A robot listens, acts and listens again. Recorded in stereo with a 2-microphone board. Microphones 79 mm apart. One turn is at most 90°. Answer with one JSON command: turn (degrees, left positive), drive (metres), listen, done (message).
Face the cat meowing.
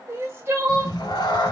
{"turn": 65}
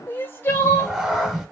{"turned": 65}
{"done": "Found it: a cat meowing, straight ahead, 1 to 2 m away."}